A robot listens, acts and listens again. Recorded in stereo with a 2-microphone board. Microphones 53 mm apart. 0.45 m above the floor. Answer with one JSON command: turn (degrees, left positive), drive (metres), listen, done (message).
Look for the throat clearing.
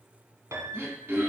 {"turn": -45}
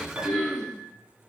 {"done": "Found it: throat clearing, straight ahead, 1 to 2 m away."}